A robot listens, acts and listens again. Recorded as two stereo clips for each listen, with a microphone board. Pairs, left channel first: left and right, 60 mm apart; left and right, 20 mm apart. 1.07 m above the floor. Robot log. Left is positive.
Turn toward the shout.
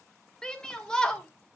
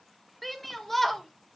cmd yaw +30
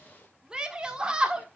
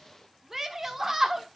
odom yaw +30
note: So it is at 15° right.
cmd yaw -15
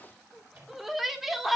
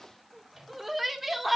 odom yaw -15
end: Facing the shout.